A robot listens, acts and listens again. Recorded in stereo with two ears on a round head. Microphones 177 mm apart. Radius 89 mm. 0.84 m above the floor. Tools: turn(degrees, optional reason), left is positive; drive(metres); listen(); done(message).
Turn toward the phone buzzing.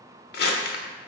listen()
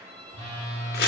turn(degrees=-30, reason="The phone buzzing: about 30° right or 150° right.")
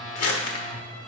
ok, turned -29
done("Found it: a phone buzzing, straight ahead, 2 to 4 m away.")